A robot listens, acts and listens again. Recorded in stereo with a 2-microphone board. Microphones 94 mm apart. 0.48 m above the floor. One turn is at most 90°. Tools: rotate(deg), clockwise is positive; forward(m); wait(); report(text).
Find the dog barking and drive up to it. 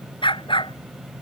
rotate(-75)
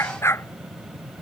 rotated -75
rotate(-30)
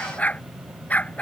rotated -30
rotate(-15)
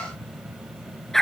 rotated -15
forward(1.0)
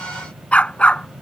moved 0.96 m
rotate(-15)
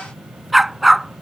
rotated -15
forward(1.0)
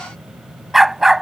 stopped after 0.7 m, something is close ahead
report("I am next to the dog barking.")